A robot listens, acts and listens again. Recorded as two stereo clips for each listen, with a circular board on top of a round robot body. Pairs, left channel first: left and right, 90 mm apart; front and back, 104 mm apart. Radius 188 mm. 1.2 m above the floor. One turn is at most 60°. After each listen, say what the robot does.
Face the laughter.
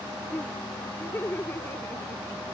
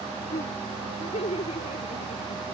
Turn 20° left.
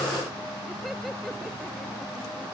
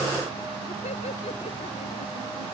Keep listening.
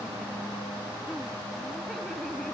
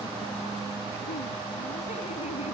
Keep listening.
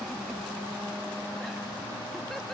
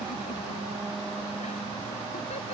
I heard laughter from this way, but can't make it out now.